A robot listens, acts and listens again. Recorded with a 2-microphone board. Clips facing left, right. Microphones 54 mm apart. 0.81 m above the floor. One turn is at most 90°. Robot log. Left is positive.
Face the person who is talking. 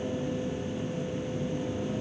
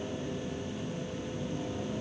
cmd idle
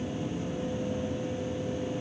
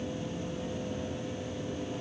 cmd idle
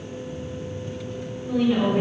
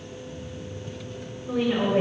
note: The woman speaking: about 50° right or 130° right.
cmd yaw -50
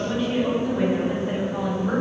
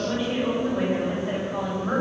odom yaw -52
end: Facing the woman speaking.